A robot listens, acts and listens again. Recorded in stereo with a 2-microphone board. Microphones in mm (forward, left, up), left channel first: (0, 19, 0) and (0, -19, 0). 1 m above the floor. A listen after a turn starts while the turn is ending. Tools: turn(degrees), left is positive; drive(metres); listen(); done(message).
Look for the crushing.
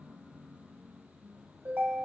listen()
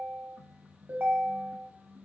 listen()
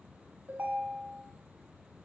done("I can't make out crushing to turn to.")